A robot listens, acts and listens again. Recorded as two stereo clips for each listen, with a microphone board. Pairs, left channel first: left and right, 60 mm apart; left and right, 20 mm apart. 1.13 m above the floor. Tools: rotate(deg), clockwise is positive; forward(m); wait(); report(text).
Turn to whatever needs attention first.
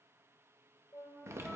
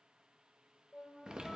wait()
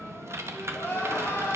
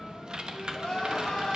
rotate(-35)
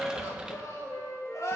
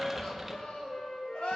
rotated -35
rotate(-110)
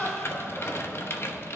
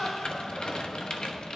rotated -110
rotate(-50)
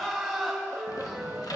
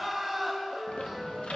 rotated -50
report("Facing the crying.")